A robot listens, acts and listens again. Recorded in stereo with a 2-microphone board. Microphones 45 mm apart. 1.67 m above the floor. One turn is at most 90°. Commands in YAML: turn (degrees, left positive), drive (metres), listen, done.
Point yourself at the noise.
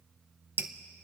turn: -55
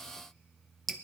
done: "Facing the dripping."